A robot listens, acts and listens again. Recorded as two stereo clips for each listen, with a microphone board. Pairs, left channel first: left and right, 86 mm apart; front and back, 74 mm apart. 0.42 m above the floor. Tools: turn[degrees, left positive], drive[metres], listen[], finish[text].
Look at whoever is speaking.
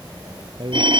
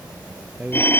Thought: The man speaking: 110° right.
Action: turn[-110]
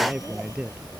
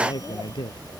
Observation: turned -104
Thought: The man speaking is now 10° right.
Action: turn[-10]
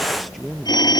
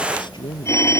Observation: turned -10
Action: finish[Facing the man speaking.]